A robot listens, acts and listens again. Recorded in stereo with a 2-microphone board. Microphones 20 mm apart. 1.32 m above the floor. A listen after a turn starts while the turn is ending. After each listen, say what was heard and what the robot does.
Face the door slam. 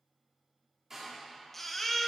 The door slam: about 25° right or 155° right. Turn 25° right.
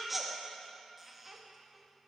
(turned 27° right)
Keep listening.
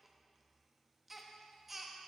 I heard a door slam, but can't make it out now. It was about 5° left or 130° right.